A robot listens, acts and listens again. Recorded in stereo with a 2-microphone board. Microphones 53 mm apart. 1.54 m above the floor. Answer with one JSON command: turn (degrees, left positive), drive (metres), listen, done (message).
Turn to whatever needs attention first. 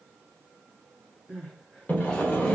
{"turn": 30}
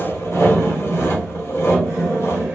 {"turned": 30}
{"listen": true}
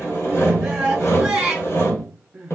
{"turn": -20}
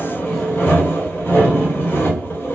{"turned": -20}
{"listen": true}
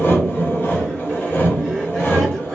{"listen": true}
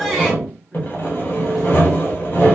{"done": "Facing where the crying came from. I can't hear it now."}